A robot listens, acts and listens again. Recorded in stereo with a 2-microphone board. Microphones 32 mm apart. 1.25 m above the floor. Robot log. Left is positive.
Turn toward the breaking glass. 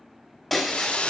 cmd yaw +30
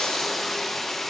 cmd idle
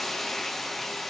end: I heard breaking glass, but can't make it out now. It was about 25° right or 145° left.